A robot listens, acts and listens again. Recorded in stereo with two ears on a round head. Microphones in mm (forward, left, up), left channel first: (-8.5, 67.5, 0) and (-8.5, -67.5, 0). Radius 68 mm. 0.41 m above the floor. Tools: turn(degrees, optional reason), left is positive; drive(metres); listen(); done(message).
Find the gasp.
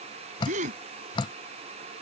turn(degrees=-55, reason="The gasp: about 55° right or 125° right.")
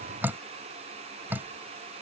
listen()
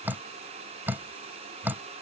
done("I heard a gasp, but can't make it out now. It was about straight ahead or 70° right.")